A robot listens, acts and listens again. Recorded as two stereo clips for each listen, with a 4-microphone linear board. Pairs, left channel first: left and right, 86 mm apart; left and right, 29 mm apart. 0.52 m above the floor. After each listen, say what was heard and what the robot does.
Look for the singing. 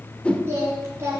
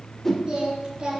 The singing: about 35° right or 145° right. Turn 35° right.
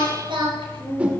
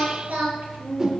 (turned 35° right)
So it is at 105° right. Turn 105° right.
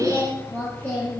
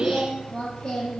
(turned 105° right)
The singing is now 20° left. Turn 20° left.
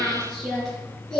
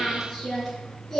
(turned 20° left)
Facing the singing, over 4 m away.